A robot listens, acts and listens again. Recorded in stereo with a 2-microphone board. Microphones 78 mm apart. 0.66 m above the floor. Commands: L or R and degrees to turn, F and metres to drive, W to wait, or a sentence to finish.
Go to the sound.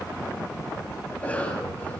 L20
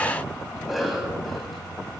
F1.0
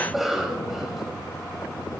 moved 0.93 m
F1.0
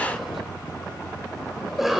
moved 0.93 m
F1.0
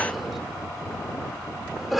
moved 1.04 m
F1.0
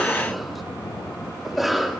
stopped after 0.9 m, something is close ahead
Arrived at the cough, straight ahead.